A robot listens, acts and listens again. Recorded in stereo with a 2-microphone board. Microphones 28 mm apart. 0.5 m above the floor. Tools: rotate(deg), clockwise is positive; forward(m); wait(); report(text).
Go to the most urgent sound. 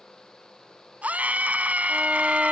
rotate(90)
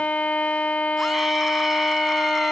wait()
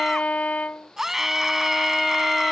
rotate(15)
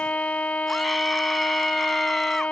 wait()
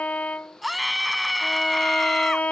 forward(1.0)
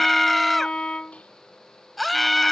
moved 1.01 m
forward(1.0)
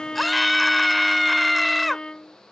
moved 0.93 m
forward(1.0)
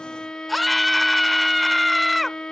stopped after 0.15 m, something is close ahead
report("Arrived at the scream, straight ahead.")